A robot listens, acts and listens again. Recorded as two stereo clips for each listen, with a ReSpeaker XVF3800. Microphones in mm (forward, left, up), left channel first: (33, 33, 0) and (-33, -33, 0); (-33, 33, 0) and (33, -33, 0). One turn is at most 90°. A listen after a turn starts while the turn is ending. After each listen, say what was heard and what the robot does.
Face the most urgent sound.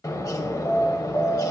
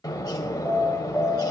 The alarm: 15° left. Turn 15° left.
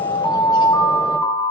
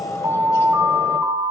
Found it: an alarm, straight ahead, 1 to 2 m away.